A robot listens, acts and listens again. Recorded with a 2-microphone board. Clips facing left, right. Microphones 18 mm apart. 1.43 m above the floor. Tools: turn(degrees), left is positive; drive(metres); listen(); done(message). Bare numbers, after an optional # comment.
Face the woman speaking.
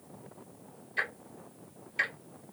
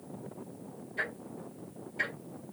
listen()
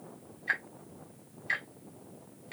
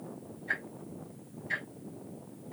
listen()
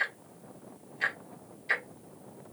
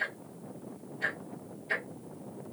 done("I can't make out a woman speaking to turn to.")